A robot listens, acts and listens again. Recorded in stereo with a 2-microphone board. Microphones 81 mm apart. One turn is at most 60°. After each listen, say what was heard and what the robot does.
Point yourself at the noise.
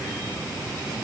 Keep listening.
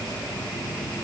Keep listening.
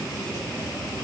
I can't make out anything.